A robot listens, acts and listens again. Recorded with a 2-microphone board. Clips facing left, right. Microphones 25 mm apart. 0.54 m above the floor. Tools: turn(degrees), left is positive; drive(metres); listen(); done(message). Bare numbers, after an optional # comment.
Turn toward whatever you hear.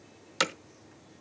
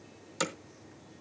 # The hammering: about 60° left or 120° left.
turn(60)
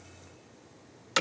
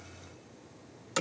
# So it is at 50° left.
turn(50)
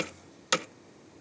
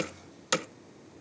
# The hammering is now 10° left.
turn(10)
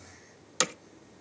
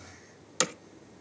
done("Found it: hammering, straight ahead, under 1 m away.")